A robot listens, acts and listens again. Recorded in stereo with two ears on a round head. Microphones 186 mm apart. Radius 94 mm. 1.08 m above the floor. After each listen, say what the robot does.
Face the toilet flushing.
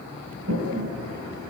Turn 70° right.
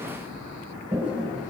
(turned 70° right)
Turn 10° right.
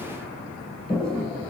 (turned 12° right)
Found it: a toilet flushing, straight ahead, 2 to 4 m away.